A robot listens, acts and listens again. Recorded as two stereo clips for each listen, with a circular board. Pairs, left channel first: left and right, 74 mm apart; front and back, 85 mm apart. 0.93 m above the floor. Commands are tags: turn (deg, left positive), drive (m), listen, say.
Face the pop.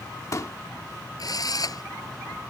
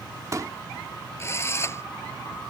<turn deg="135"/>
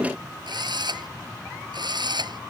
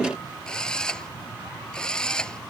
<say>Facing where the pop came from. I can't hear it now.</say>